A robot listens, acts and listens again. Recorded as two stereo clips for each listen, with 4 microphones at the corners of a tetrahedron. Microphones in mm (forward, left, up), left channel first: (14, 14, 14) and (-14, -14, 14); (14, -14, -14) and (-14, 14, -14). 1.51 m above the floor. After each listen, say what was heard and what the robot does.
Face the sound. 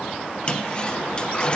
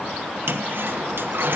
The toilet flushing: 110° left. Turn 110° left.
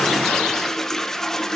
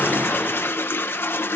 The toilet flushing is now 35° right. Turn 35° right.
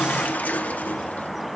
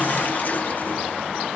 Found it: a toilet flushing, straight ahead, 1 to 2 m away.